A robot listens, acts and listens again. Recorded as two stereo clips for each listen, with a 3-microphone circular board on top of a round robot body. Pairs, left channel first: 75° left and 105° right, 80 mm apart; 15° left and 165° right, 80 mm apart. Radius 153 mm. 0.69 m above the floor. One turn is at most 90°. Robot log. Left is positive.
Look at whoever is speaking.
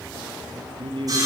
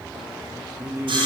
note: The man speaking: 100° right.
cmd yaw -90
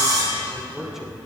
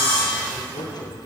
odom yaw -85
note: Nothing new. It was at 15° right.
cmd yaw -15
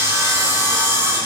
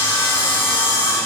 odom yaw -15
cmd idle
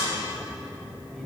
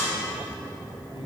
end: Facing where the man speaking came from. I can't hear it now.